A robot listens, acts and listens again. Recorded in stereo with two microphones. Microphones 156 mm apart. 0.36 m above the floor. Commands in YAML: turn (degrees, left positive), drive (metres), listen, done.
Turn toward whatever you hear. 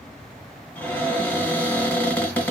turn: 30
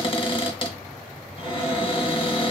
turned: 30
turn: 140
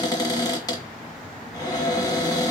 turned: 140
turn: 30
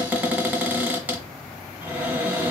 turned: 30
turn: -15
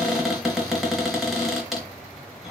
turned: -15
done: "Facing the cupboard door, under 1 m away."